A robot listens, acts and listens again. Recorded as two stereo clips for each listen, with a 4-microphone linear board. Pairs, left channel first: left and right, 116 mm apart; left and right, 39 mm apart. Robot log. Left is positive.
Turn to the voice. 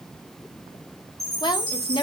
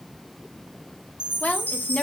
note: The woman speaking: about 40° left or 140° left.
cmd yaw +40
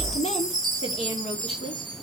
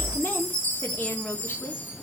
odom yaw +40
note: So it is at 90° left.
cmd yaw +90
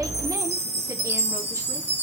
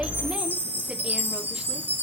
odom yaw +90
cmd idle
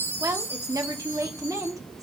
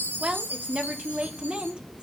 note: The woman speaking is now 35° right.
cmd yaw -35
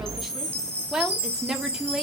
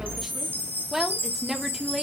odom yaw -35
end: Facing the woman speaking, 1 to 2 m away.